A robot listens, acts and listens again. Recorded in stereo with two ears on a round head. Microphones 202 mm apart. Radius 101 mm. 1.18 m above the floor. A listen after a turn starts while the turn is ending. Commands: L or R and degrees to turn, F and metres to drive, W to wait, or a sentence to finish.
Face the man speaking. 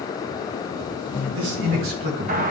R60
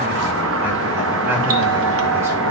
W
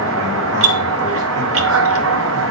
W
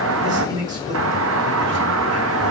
R20
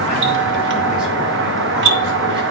W
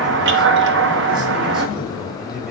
W
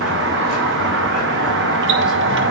I heard a man speaking from this way, but can't make it out now.